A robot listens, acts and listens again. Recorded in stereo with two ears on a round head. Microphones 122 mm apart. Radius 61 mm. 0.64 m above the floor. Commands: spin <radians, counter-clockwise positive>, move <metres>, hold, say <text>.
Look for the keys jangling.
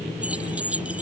spin -0.52
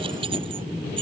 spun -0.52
spin -2.44
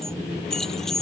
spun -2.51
say Facing the keys jangling.